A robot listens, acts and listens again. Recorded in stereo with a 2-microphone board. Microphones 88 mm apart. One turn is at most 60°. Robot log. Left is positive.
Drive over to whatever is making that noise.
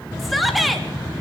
cmd yaw +30
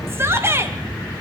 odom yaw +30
note: So it is at 30° right.
cmd yaw -30
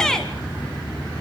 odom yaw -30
cmd fwd 1.0
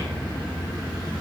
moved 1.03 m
cmd idle
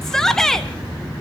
cmd fwd 1.0
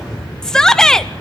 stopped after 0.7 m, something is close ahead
end: Arrived at the shout, straight ahead.